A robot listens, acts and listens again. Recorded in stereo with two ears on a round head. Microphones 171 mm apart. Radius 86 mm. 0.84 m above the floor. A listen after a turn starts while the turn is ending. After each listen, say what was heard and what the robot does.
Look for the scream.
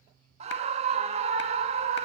The scream: about 35° right or 145° right. Turn 35° right.
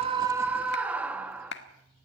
So it is at 10° right. Turn 10° right.
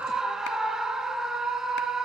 Facing the scream.